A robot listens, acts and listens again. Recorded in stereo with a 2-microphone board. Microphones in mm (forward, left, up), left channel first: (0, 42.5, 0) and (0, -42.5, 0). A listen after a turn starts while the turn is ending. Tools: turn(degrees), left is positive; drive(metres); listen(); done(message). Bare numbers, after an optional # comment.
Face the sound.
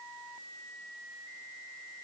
listen()
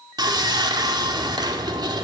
# The sawing: about 60° right or 120° right.
turn(-60)
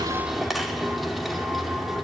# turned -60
done("Found it: sawing, straight ahead, 2 to 4 m away.")